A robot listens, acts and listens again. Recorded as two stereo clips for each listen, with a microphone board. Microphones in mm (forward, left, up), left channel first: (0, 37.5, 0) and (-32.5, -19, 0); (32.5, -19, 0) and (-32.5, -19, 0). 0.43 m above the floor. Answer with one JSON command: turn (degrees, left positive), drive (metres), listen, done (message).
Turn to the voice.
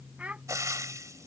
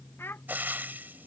{"turn": -50}
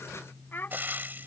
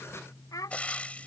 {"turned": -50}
{"done": "Found it: a child speaking, straight ahead."}